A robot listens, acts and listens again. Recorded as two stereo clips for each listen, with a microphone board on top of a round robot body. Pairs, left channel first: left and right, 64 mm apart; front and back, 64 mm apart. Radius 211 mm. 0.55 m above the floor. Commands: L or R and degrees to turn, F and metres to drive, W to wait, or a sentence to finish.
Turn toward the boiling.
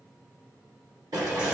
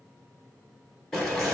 R85
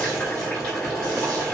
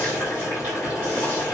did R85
L20
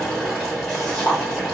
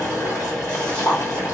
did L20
L10
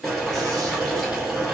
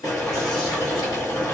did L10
Found it: boiling, straight ahead.